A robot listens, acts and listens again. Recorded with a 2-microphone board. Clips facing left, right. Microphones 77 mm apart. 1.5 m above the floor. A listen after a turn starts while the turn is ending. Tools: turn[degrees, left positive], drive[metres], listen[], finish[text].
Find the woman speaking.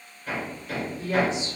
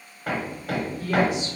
Thought: The woman speaking: about 25° left or 155° left.
Action: turn[25]
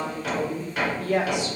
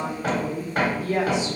Thought: So it is at 115° left.
Action: turn[115]
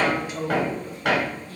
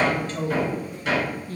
Thought: The woman speaking is now 45° right.
Action: turn[-45]
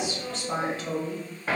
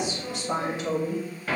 Thought: The woman speaking is now 20° right.
Action: turn[-20]
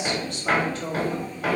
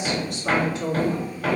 Thought: The woman speaking is now 15° right.
Action: turn[-15]
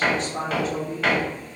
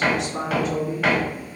Action: finish[Facing the woman speaking, 1 to 2 m away.]